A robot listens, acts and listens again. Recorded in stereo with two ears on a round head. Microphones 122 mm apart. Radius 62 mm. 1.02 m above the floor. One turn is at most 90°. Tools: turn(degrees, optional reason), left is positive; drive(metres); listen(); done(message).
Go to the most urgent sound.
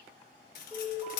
turn(degrees=25, reason="The alarm: about 25° left or 155° left.")
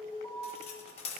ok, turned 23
turn(degrees=90, reason="So it is at 130° left.")
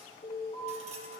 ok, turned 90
turn(degrees=35, reason="The alarm is now 35° left.")
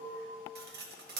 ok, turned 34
drive(metres=1.0)
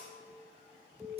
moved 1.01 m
drive(metres=1.0)
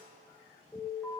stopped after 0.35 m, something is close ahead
done("I am next to the alarm.")